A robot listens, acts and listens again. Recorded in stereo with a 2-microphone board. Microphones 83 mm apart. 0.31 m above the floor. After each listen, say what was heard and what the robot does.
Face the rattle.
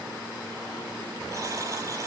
Keep listening.
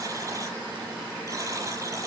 Keep listening.
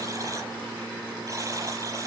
I can't make out a rattle, only a buzzer.